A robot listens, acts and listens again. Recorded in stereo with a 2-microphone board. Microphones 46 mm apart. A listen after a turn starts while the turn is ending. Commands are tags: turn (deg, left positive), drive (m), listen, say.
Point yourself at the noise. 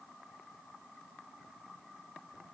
<listen/>
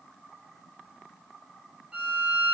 <turn deg="-20"/>
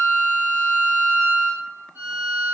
<turn deg="-140"/>
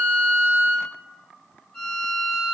<say>Found it: a violin, straight ahead, 1 to 2 m away.</say>